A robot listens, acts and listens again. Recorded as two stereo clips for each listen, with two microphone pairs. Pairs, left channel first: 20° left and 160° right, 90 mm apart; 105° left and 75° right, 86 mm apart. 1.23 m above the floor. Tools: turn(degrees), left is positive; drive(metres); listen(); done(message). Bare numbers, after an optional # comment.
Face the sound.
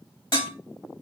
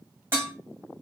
# The dishes clattering: 15° right.
turn(-15)
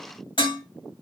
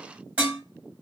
done("Facing the dishes clattering, 1 to 2 m away.")